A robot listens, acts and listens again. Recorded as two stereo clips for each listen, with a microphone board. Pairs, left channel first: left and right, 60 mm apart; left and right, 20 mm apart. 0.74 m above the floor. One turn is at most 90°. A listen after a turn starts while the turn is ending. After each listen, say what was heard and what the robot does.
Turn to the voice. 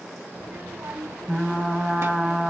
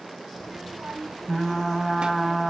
The child speaking: about 50° right or 130° right. Turn 50° right.
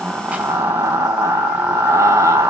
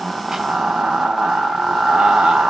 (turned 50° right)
Keep listening.
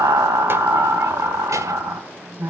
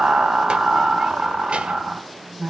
Keep listening.
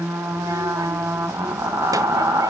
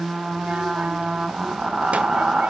I heard a child speaking, but can't make it out now. It was about straight ahead or 80° right.